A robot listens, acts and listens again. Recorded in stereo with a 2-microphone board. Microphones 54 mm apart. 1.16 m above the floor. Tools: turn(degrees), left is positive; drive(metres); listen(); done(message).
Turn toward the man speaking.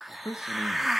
turn(degrees=90)
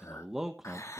done("Found it: a man speaking, straight ahead, 1 to 2 m away.")